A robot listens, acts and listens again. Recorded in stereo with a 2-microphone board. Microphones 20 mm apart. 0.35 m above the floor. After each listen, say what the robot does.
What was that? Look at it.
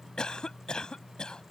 Turn 40° left.
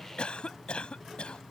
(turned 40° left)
Turn 90° left.
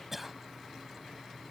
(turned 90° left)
Turn 15° right.
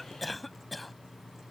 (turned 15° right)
Found it: a cough, straight ahead.